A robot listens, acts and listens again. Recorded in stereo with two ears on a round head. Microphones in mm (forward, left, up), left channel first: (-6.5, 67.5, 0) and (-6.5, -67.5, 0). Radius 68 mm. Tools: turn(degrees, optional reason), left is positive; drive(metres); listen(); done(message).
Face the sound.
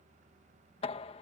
turn(degrees=40, reason="The knocking: about 40° left or 140° left.")
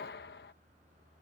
turn(degrees=100, reason="So it is at 100° left.")
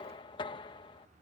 turn(degrees=30, reason="The knocking is now 30° left.")
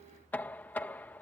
turn(degrees=10, reason="The knocking is now 10° left.")
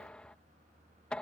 done("Found it: knocking, straight ahead.")